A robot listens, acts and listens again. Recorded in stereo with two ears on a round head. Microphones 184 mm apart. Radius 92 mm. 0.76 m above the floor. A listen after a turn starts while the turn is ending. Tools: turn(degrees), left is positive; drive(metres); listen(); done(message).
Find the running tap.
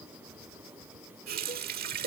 turn(degrees=-50)
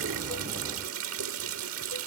turn(degrees=-80)
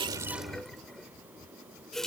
done("Found it: a running tap, straight ahead.")